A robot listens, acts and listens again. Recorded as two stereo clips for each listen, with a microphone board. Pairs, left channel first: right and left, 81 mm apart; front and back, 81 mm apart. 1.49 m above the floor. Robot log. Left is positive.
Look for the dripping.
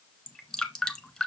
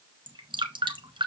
note: The dripping: 170° right.
cmd yaw -170
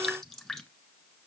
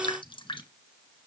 end: Facing the dripping, 1 to 2 m away.